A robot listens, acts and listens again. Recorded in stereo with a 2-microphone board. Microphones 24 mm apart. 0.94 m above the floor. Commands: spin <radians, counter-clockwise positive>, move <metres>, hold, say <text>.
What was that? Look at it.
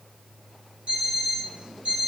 spin -1.57
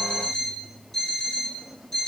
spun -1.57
spin 0.17
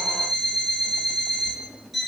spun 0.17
say Found it: an alarm clock, straight ahead.